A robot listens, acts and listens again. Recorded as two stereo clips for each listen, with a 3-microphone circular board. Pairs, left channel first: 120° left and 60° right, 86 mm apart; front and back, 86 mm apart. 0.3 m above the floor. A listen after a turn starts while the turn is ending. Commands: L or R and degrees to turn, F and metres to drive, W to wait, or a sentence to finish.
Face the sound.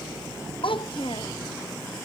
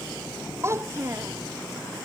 L120
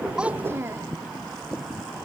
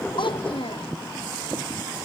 W
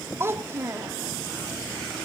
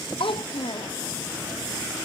Facing the child speaking.